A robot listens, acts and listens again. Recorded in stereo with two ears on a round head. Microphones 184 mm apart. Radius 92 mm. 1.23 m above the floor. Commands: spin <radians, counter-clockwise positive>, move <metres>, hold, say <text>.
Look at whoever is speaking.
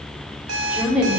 spin -0.52
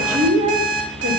spin -2.53
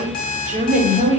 spin -0.61
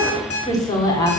spin 0.35
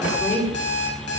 hold
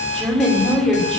say Facing the woman speaking.